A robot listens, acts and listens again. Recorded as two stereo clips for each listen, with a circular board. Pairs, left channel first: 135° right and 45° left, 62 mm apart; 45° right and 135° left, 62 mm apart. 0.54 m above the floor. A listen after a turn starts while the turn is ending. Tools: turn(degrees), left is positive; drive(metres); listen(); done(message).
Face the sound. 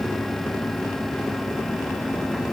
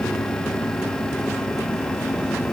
listen()
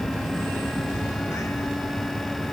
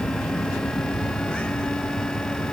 listen()
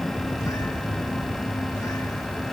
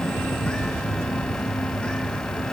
done("I can't make out anything.")